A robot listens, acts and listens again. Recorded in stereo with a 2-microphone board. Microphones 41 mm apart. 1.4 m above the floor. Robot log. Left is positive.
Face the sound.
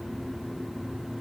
cmd idle
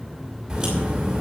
cmd yaw -30
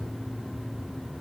cmd idle
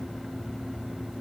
end: I heard a crack, but can't make it out now. It was about 15° left or 135° right.